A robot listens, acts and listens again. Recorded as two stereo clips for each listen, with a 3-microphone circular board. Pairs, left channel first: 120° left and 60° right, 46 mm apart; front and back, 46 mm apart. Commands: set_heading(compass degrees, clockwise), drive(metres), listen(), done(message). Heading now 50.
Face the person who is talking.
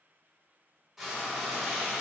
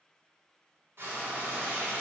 listen()
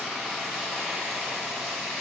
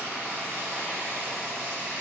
listen()
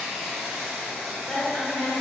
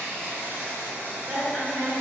set_heading(245)
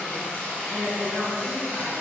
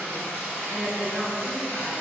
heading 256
set_heading(246)
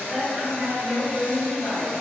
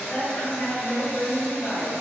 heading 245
done("Found it: a woman speaking, straight ahead.")